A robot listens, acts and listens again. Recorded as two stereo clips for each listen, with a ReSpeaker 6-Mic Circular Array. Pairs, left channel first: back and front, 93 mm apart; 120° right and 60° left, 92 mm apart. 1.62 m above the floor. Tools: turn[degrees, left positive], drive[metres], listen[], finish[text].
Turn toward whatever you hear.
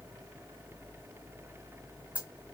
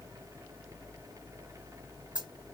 Thought: The dropped coin: 75° left.
Action: turn[75]
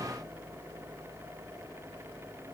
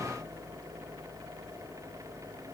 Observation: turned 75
Action: finish[I heard a dropped coin from this way, but can't make it out now.]